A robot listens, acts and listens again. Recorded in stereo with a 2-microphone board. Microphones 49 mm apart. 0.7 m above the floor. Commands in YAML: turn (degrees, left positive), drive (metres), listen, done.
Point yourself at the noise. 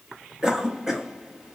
turn: -30
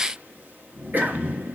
turn: -135
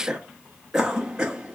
turn: -15
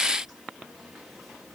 listen: true
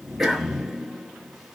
done: "Facing the cough, under 1 m away."